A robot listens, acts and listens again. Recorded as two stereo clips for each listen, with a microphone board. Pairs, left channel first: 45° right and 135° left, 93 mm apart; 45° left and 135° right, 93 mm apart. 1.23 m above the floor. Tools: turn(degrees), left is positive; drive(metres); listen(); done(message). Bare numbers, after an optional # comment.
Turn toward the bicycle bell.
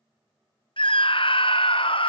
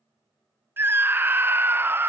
listen()
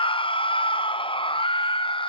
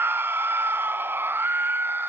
listen()
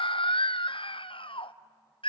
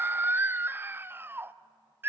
done("I can't make out a bicycle bell, only a scream.")